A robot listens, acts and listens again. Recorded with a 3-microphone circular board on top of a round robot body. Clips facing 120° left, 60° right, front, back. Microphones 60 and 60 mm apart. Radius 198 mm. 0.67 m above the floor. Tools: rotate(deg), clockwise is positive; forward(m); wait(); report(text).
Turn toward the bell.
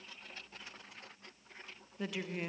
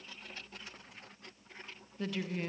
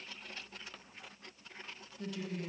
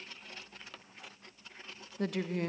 wait()
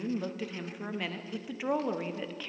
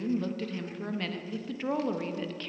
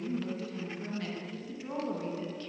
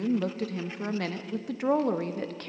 wait()
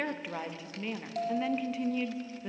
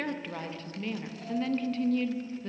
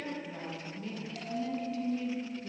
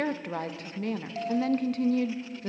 rotate(-120)
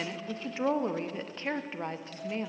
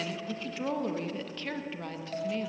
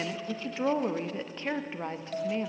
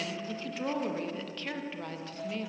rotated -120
rotate(15)
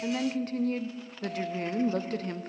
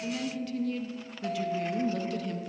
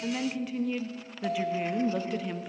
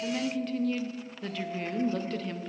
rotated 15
report("Found it: a bell, straight ahead, 1 to 2 m away.")